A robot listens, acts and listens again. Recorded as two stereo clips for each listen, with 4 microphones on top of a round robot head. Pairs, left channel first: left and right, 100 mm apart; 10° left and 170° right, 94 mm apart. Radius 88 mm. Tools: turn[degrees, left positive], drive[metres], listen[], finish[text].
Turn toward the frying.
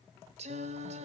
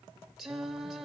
Action: listen[]
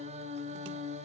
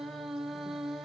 Action: listen[]
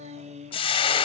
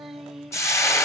Thought: The frying: 65° left.
Action: turn[65]
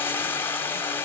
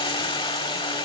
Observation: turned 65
Thought: The frying is now 25° left.
Action: turn[25]
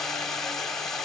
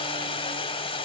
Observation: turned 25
Action: finish[Found it: frying, straight ahead, 1 to 2 m away.]